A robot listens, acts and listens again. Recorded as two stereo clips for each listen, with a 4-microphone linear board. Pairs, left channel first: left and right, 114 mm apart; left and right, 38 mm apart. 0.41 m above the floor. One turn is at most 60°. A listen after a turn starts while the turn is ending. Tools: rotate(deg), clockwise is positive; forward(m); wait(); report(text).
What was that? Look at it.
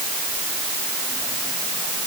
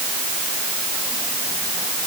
wait()
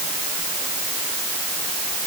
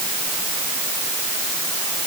wait()
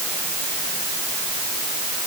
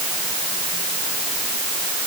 report("I can't make out anything.")